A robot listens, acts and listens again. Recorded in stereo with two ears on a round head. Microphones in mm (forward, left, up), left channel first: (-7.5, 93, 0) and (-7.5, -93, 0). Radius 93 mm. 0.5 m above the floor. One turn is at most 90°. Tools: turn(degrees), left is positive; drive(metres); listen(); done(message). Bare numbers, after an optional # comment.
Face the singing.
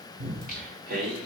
# The singing: about 50° right or 130° right.
turn(-50)
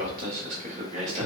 # So it is at 35° right.
turn(-35)
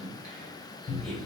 done("Found it: singing, straight ahead, 1 to 2 m away.")